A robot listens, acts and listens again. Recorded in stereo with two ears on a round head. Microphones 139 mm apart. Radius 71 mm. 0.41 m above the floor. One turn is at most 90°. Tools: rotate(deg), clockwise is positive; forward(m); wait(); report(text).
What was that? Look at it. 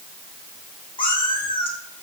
rotate(-40)
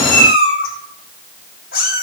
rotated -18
rotate(-90)
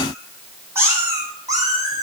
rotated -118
rotate(25)
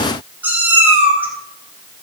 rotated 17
rotate(10)
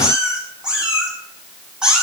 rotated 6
report("Facing the cat meowing, 2 to 4 m away.")